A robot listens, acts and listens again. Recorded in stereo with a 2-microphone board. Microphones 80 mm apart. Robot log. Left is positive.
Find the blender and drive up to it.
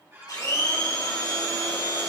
note: The blender: about 55° left or 125° left.
cmd yaw +55
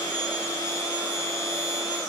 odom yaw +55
note: So it is at 60° left.
cmd yaw +60
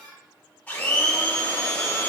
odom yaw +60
note: The blender is now 20° left.
cmd yaw +20
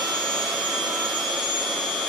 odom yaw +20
cmd fwd 1.0
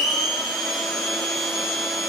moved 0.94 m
cmd fwd 1.0
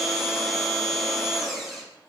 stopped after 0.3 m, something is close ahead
end: Arrived at the blender, straight ahead.